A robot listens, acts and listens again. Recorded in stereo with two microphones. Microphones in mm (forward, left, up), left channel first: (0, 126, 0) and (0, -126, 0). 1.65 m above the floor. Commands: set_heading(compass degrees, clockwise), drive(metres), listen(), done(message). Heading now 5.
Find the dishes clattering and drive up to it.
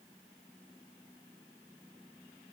listen()
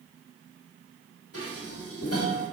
set_heading(300)
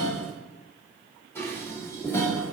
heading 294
set_heading(284)
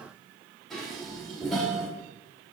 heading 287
drive(1.0)
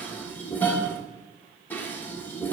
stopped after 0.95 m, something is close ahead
set_heading(277)
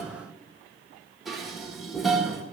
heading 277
done("Arrived at the dishes clattering, straight ahead.")